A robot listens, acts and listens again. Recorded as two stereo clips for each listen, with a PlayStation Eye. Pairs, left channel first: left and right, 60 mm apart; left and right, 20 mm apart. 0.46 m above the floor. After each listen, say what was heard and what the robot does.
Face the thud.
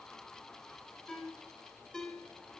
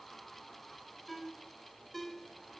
Keep listening.
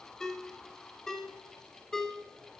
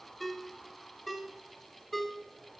Keep listening.
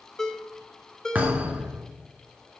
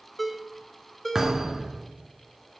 The thud: about 30° right or 150° right. Turn 30° right.
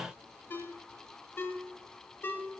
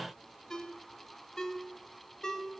Keep listening.
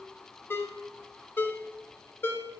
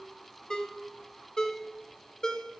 I heard a thud, but can't make it out now. It was about straight ahead or 120° right.